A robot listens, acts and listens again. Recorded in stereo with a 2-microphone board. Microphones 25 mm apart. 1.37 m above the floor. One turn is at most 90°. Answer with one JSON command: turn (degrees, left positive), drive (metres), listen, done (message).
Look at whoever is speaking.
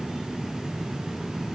{"listen": true}
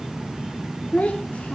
{"turn": 70}
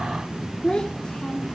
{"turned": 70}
{"turn": 40}
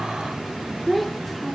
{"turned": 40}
{"done": "Found it: a child speaking, straight ahead, 2 to 4 m away."}